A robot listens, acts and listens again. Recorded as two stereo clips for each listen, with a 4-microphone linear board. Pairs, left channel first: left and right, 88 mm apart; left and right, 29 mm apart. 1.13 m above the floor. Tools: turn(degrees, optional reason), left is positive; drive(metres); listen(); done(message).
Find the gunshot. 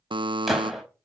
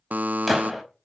turn(degrees=-30)
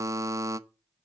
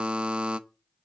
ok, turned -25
listen()
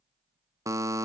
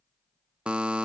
done("I heard a gunshot, but can't make it out now. It was about 20° left or 150° right.")